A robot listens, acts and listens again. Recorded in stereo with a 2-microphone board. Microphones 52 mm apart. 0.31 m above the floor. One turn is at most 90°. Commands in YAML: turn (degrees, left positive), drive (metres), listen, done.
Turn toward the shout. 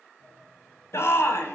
turn: 55
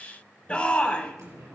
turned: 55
turn: 25
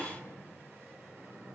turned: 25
done: "Found it: a shout, straight ahead, 1 to 2 m away."